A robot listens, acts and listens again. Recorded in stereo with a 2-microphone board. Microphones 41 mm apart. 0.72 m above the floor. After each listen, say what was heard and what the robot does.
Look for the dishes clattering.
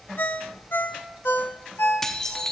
Turn 30° left.
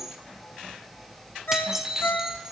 So it is at 15° right. Turn 15° right.
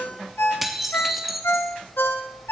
Found it: dishes clattering, straight ahead.